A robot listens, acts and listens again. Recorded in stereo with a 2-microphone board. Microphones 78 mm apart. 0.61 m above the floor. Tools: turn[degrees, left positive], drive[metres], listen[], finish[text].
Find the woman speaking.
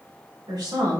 Thought: The woman speaking: about 65° right or 115° right.
Action: turn[-65]
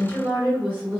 Thought: So it is at 30° right.
Action: turn[-30]
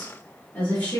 Thought: The woman speaking is now 25° left.
Action: turn[25]
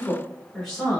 Action: finish[Facing the woman speaking, 1 to 2 m away.]